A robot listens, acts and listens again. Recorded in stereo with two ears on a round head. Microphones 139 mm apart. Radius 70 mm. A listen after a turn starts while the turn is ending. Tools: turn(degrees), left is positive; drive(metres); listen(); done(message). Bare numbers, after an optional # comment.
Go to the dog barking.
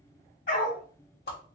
# The dog barking: about 70° left or 110° left.
turn(70)
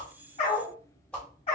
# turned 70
# So it is at 40° left.
turn(40)
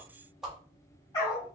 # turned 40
# The dog barking is now 25° left.
turn(25)
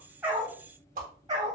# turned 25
# The dog barking is now 30° right.
turn(-30)
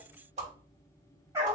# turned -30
# The dog barking is now 20° right.
turn(-20)
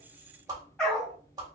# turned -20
drive(1.0)
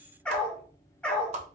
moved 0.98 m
drive(1.0)
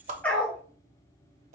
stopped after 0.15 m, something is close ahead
# The dog barking is now 10° left.
turn(10)
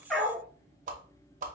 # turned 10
done("Arrived at the dog barking, straight ahead.")